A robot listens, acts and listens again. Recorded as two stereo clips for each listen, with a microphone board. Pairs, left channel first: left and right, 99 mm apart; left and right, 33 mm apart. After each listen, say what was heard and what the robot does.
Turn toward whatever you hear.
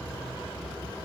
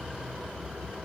Keep listening.
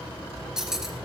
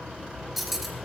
Turn 30° right.
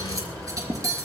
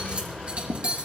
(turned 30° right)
So it is at 145° right. Turn 145° right.
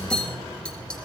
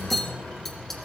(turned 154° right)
The cutlery clinking is now 10° left. Turn 10° left.
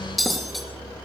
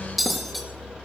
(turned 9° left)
Facing the cutlery clinking, 2 to 4 m away.